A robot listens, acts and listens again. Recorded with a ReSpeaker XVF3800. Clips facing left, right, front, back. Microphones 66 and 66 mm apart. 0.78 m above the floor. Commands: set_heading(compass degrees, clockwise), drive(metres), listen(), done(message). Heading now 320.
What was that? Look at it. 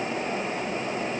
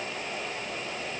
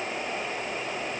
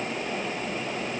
listen()
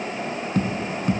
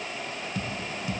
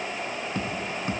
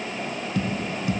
set_heading(270)
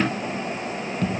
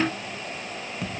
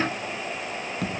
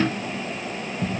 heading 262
done("Facing the tapping.")